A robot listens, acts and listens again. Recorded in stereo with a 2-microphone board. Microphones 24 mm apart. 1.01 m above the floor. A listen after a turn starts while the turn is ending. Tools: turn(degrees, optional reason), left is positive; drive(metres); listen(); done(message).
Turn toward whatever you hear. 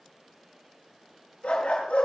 turn(degrees=90)
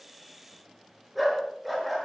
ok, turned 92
done("Facing the dog barking, over 4 m away.")